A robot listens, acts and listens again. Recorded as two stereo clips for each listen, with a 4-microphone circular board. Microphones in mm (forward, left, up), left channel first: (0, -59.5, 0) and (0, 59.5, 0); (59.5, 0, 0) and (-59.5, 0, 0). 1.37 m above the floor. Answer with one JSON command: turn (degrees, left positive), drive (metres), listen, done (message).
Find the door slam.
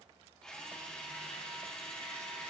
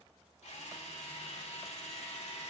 {"listen": true}
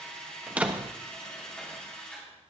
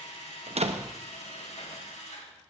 {"turn": 170}
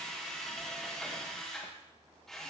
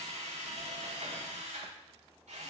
{"done": "Facing where the door slam came from. I can't hear it now."}